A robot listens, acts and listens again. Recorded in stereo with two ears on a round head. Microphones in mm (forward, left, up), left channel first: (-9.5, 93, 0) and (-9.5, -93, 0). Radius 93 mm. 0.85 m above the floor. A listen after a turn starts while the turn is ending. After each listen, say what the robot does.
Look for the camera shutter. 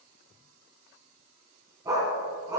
Keep listening.
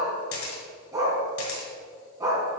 Turn 70° left.
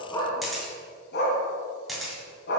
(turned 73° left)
Found it: a camera shutter, straight ahead, 2 to 4 m away.